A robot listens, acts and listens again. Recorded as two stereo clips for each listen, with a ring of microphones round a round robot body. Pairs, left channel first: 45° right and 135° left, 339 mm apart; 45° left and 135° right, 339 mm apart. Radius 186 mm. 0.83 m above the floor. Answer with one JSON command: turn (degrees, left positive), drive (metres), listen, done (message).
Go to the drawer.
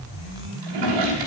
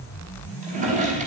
{"turn": 155}
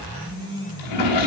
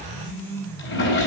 {"turn": -15}
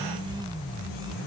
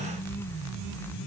{"listen": true}
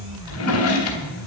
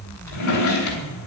{"drive": 1.0}
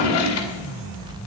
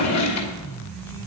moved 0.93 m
{"drive": 1.0}
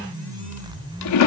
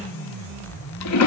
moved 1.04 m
{"drive": 1.0}
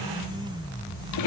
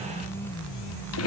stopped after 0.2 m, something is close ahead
{"done": "I am next to the drawer."}